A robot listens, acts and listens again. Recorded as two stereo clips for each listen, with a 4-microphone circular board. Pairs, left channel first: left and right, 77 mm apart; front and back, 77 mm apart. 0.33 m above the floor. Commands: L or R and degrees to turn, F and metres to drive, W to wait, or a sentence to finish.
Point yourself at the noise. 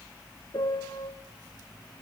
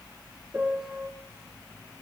L110
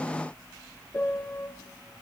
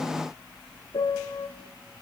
L25
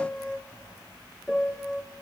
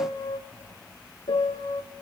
Facing the piano.